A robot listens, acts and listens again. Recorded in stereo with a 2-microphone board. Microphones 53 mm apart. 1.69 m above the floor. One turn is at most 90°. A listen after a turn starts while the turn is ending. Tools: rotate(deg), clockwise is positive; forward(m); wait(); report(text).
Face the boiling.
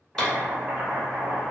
rotate(35)
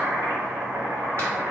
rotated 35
rotate(90)
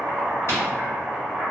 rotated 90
rotate(25)
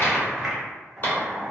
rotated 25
report("Found it: boiling, straight ahead, under 1 m away.")